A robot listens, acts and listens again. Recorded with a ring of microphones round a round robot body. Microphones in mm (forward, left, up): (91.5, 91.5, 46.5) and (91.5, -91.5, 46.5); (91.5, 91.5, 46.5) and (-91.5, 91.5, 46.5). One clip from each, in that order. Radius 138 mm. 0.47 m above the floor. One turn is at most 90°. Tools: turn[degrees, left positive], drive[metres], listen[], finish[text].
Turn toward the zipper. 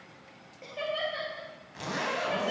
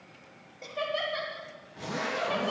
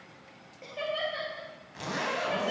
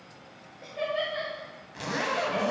Thought: The zipper: 105° left.
Action: turn[90]
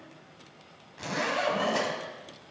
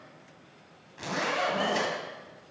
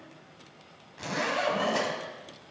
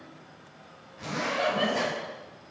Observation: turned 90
Action: finish[Found it: a zipper, straight ahead, 2 to 4 m away.]